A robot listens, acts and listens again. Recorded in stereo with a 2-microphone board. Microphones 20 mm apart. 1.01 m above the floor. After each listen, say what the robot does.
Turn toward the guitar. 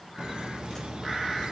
Keep listening.
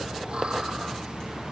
Keep listening.
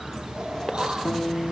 Turn 65° left.
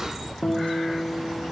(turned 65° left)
Turn 45° left.
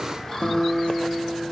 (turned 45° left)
Turn 15° left.
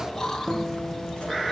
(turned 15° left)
Facing the guitar, 2 to 4 m away.